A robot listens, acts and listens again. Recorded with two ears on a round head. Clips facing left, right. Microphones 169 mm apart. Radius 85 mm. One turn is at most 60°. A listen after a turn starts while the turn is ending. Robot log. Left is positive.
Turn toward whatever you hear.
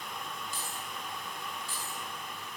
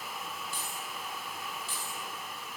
note: The keys jangling: about 60° right or 120° right.
cmd yaw -60
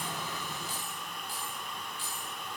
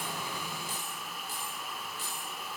note: So it is at 35° right.
cmd yaw -35
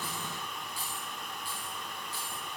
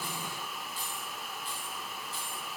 note: The keys jangling is now 15° left.
cmd yaw +15
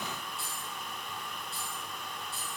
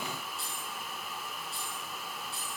end: Found it: keys jangling, straight ahead.